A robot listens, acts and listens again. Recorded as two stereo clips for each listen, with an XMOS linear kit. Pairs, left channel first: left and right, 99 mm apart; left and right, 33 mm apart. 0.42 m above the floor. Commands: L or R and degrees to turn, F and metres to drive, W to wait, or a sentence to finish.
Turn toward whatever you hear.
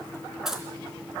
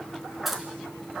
R30
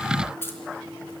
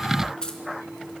L25
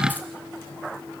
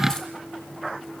W
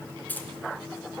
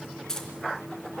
L20
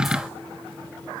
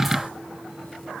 W
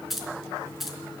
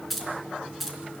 Found it: keys jangling, straight ahead, 2 to 4 m away.